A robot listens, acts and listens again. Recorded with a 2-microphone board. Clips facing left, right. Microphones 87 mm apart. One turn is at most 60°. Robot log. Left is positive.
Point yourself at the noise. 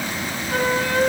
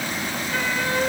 note: The flute: about 45° left or 135° left.
cmd yaw +45
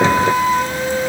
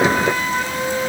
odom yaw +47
end: Found it: a flute, straight ahead, over 4 m away.